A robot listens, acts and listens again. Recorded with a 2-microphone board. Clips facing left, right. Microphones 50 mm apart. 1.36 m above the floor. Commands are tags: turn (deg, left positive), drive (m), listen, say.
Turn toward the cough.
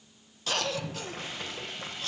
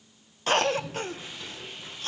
<turn deg="-40"/>
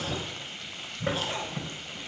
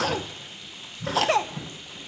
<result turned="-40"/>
<turn deg="-100"/>
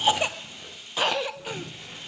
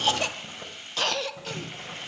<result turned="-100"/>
<turn deg="15"/>
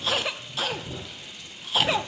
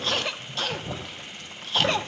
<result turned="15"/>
<say>Facing the cough.</say>